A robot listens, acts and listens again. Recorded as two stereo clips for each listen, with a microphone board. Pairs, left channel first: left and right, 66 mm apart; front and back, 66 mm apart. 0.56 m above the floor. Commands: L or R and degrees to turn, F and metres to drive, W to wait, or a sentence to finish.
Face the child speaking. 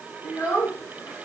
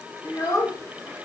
L35
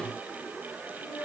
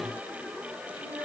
R15
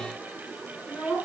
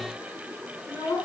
R10
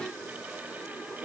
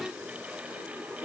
Facing the child speaking, over 4 m away.